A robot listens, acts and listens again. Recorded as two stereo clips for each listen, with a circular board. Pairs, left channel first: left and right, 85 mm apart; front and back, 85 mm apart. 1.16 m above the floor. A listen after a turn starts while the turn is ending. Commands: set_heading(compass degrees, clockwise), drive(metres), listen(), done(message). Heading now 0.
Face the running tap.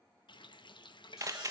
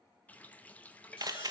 set_heading(285)
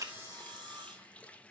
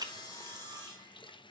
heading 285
set_heading(270)
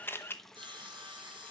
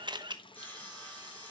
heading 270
done("Facing the running tap, under 1 m away.")